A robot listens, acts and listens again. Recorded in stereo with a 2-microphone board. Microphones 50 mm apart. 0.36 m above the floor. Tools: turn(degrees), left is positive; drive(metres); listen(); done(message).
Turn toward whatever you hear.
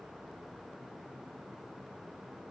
listen()
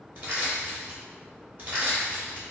turn(degrees=-45)
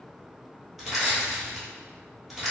done("Found it: crushing, straight ahead.")